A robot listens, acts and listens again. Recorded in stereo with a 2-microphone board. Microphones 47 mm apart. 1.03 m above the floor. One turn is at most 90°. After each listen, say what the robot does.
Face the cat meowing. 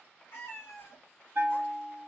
Turn 55° left.
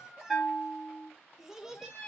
Turn 30° left.
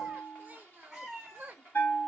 Turn 10° right.
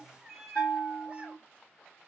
Turn 15° right.
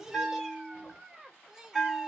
Keep listening.
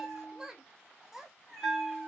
Found it: a cat meowing, straight ahead.